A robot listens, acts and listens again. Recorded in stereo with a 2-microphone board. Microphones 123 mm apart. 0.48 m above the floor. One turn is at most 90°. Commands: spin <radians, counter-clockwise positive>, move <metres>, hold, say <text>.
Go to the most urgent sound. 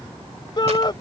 spin 0.70
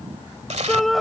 move 1.0
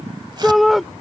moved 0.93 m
move 1.0
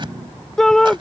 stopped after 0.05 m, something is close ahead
say I am next to the shout.